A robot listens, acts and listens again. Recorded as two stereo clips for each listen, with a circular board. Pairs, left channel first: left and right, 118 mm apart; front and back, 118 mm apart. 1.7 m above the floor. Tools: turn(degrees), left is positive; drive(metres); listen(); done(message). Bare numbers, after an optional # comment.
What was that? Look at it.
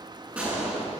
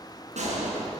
# The gunshot: 170° right.
turn(-170)
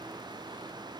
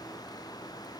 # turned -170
done("Facing where the gunshot came from. I can't hear it now.")